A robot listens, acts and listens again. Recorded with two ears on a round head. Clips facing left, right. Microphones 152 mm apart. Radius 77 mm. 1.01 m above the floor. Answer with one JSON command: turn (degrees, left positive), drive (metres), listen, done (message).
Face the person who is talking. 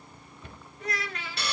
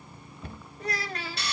{"turn": -30}
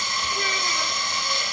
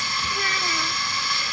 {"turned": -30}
{"listen": true}
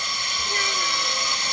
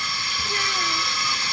{"listen": true}
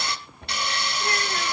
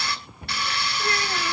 {"done": "I heard a child speaking, but can't make it out now. It was about straight ahead or 120° right."}